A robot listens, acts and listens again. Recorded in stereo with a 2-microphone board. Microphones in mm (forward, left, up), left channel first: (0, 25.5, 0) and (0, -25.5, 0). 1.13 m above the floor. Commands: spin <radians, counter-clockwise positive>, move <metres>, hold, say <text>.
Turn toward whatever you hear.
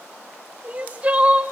spin -0.44
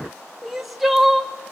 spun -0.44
say Found it: crying, straight ahead, 1 to 2 m away.